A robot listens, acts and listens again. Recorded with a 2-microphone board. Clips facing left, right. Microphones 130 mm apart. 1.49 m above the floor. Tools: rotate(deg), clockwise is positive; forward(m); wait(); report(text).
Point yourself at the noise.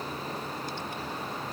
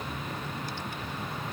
wait()
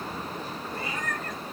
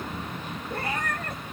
rotate(65)
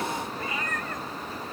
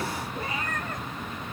rotate(35)
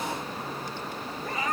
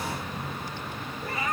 report("Facing the cat meowing, 2 to 4 m away.")